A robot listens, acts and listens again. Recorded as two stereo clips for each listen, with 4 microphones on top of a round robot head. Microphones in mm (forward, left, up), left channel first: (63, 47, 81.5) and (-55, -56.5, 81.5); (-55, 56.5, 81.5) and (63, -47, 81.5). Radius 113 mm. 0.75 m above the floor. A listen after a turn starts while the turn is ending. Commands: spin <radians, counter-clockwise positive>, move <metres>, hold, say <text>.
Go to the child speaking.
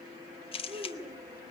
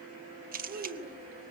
spin -1.22
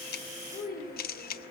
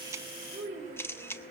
spin 0.17
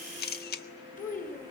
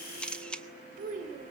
move 1.0
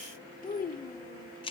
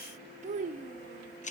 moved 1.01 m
move 1.0
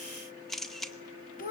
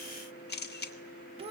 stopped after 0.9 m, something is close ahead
spin 0.17
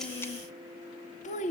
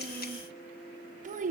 say Arrived at the child speaking, straight ahead.